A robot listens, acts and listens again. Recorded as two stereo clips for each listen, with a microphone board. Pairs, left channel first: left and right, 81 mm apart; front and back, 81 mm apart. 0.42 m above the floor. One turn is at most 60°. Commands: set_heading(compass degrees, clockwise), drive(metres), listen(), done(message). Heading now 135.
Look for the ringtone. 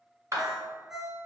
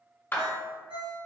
set_heading(195)
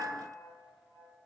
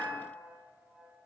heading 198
set_heading(258)
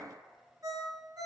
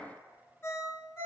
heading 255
set_heading(310)
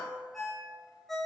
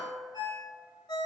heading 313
done("Facing the ringtone.")